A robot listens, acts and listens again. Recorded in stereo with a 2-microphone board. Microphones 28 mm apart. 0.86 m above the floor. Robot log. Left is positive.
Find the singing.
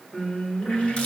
note: The singing: about 50° left or 130° left.
cmd yaw +50
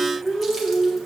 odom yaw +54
note: So it is at 75° left.
cmd yaw +75
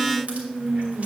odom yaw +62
note: The singing is now 15° left.
cmd yaw +15
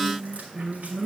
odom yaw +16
end: Facing the singing.